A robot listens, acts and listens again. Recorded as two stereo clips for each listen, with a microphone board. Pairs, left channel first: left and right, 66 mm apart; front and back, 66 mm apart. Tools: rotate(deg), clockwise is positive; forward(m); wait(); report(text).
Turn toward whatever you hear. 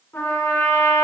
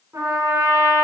rotate(-135)
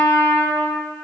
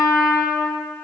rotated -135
report("Facing the trumpet.")